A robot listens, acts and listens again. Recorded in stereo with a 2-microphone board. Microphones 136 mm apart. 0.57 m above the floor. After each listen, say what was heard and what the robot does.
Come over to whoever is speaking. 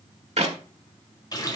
Keep listening.
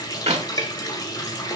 Keep listening.
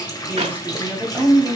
Turn 30° right.
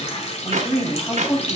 So it is at 15° left. Turn 15° left.
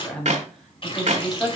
Drive 1.0 m forward.
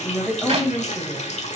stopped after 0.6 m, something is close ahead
Something is in my way. I am facing the woman speaking but have not reached it.